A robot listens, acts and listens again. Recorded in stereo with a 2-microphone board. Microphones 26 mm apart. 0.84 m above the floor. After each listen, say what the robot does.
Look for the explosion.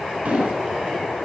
Turn 65° right.
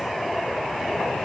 Keep listening.
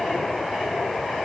I heard an explosion, but can't make it out now. It was about straight ahead or 50° right.